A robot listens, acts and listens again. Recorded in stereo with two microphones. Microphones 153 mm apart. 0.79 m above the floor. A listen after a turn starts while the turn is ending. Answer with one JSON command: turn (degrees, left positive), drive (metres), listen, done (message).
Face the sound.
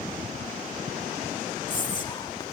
{"turn": 30}
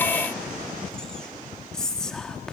{"done": "Facing the whispering, 1 to 2 m away."}